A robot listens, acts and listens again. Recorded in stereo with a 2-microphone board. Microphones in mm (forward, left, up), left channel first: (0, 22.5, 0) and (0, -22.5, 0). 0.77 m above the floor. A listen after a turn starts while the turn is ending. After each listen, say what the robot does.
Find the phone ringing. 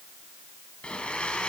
Keep listening.
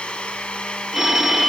Turn 30° right.
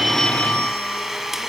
Turn 25° left.
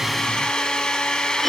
Facing the phone ringing, 1 to 2 m away.